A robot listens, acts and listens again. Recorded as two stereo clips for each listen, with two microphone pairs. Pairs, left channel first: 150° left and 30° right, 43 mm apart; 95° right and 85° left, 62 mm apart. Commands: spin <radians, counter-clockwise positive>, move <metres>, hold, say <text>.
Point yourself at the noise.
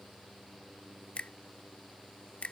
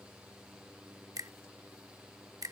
spin 1.57
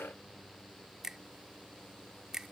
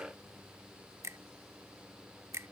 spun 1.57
spin 0.87
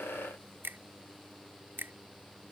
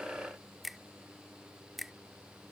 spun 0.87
say Found it: a finger snap, straight ahead.